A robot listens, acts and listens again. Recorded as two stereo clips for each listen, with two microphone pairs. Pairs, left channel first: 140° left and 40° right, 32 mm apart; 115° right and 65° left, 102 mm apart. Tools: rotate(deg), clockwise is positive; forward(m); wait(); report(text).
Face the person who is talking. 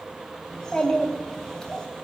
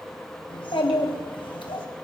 rotate(145)
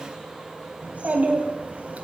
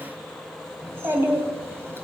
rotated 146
report("Facing the child speaking, 2 to 4 m away.")